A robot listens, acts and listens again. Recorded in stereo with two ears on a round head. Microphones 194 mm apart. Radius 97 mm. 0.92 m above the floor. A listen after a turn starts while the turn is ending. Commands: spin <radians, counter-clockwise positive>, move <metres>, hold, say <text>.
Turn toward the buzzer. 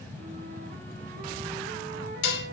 hold
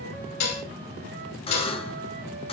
spin 0.44
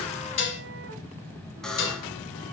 say Found it: a buzzer, straight ahead.